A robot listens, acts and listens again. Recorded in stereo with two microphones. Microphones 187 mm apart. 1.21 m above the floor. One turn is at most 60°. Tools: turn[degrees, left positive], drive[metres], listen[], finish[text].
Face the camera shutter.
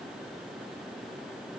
Action: listen[]
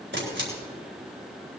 Action: turn[-60]
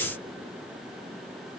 Thought: Nothing new. It was at 30° right.
Action: turn[-30]
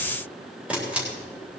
Action: finish[Facing the camera shutter, 2 to 4 m away.]